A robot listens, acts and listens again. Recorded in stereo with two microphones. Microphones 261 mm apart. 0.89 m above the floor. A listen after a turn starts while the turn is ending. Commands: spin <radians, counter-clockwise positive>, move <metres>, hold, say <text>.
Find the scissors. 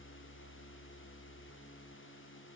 hold
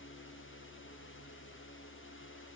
hold
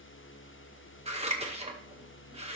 spin -0.44
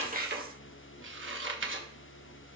spin -2.27
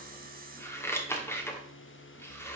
spin 0.17
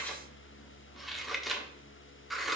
say Facing the scissors, 1 to 2 m away.